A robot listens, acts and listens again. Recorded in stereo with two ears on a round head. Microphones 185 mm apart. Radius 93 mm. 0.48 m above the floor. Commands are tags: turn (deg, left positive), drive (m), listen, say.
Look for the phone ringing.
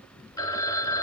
<turn deg="20"/>
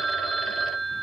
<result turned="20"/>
<say>Found it: a phone ringing, straight ahead.</say>